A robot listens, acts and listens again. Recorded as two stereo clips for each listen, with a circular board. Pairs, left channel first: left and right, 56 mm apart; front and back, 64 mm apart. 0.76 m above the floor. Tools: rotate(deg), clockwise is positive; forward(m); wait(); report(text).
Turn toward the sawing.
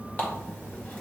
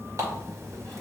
wait()
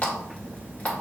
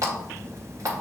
wait()
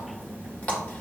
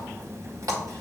report("I can't make out sawing to turn to.")